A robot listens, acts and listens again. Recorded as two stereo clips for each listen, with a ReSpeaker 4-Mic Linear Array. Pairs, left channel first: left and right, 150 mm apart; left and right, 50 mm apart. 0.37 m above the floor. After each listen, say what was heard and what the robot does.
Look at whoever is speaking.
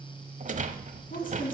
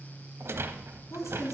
The woman speaking: about 70° left or 110° left. Turn 70° left.
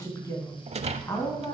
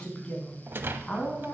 So it is at 25° left. Turn 25° left.
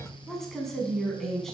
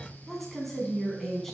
Found it: a woman speaking, straight ahead, 2 to 4 m away.